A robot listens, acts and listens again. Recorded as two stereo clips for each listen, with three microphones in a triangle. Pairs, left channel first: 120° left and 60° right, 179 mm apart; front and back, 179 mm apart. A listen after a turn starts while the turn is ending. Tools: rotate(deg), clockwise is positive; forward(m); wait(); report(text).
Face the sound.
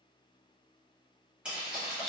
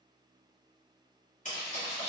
rotate(-30)
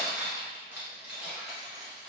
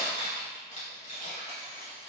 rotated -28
rotate(-35)
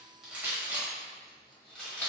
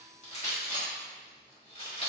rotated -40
rotate(-40)
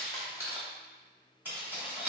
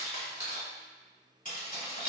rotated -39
rotate(-15)
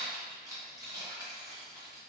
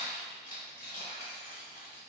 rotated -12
report("Facing the keys jangling.")